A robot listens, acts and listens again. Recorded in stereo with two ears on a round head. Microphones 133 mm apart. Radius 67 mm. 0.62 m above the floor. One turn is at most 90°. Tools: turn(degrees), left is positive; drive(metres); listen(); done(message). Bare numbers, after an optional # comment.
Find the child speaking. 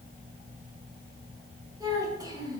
# The child speaking: about 30° right or 150° right.
turn(-30)
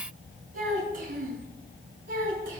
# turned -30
# So it is at 105° right.
turn(-90)
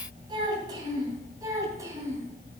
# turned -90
# The child speaking is now 25° right.
turn(-25)
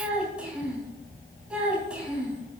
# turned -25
# The child speaking is now 10° right.
turn(-10)
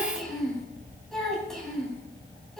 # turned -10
done("Facing the child speaking.")